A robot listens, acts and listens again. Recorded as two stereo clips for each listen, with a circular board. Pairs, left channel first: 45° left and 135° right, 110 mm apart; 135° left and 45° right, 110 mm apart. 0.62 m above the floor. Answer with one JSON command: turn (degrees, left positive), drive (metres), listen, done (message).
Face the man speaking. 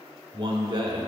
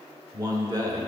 {"turn": -95}
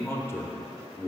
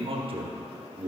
{"turn": -20}
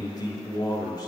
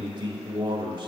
{"done": "Found it: a man speaking, straight ahead, 1 to 2 m away."}